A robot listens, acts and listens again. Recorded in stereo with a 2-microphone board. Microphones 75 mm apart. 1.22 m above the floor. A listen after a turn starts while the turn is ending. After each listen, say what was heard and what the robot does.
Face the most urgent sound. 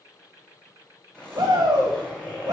The shout: about 60° right or 120° right. Turn 60° right.
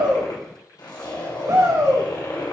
So it is at 55° right. Turn 55° right.
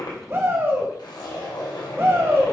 The shout is now 35° right. Turn 35° right.
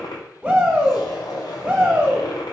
The shout is now 25° right. Turn 25° right.
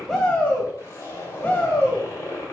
The shout is now 15° left. Turn 15° left.
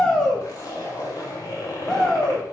Facing the shout, 1 to 2 m away.